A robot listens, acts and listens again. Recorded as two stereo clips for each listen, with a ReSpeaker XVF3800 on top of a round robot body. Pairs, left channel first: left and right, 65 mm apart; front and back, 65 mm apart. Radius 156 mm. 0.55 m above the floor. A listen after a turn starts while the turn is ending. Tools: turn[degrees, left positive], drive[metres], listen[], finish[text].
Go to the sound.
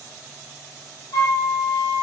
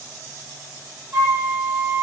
Thought: The flute: 120° left.
Action: turn[120]
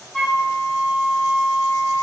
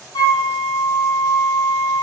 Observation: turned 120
Thought: The flute is now 15° right.
Action: turn[-15]
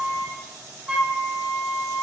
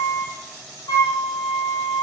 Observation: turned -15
Thought: The flute is now 10° right.
Action: turn[-10]
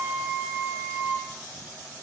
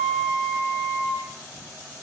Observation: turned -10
Action: drive[1.0]
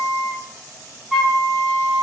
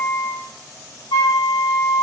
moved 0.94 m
Action: drive[1.0]
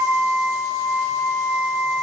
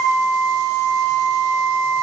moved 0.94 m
Action: drive[1.0]
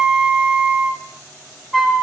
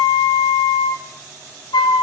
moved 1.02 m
Action: drive[1.0]
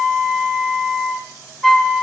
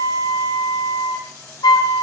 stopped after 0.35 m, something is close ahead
Action: finish[Arrived at the flute, straight ahead.]